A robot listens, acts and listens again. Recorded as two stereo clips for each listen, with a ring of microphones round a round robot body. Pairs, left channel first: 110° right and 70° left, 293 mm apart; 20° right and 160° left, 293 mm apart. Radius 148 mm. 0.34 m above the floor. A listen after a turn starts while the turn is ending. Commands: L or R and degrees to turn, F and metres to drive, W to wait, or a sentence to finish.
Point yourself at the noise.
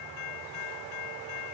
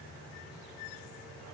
W
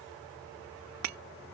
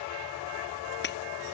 L35
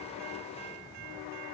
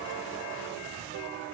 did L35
Facing where the breaking glass came from. I can't hear it now.